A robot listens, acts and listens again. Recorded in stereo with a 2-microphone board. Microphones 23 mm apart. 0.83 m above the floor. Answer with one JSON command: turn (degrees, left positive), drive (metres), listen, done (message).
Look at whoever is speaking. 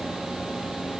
{"listen": true}
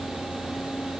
{"listen": true}
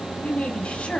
{"turn": 90}
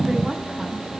{"listen": true}
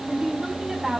{"turn": -20}
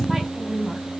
{"done": "Found it: a woman speaking, straight ahead."}